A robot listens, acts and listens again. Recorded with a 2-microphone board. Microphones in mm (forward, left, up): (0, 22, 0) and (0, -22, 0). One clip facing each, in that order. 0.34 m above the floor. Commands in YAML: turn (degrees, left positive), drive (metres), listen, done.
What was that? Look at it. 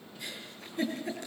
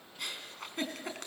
turn: -65
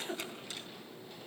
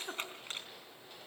turn: -40
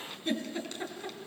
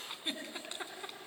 turn: -15
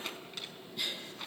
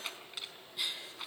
done: "Facing the giggle."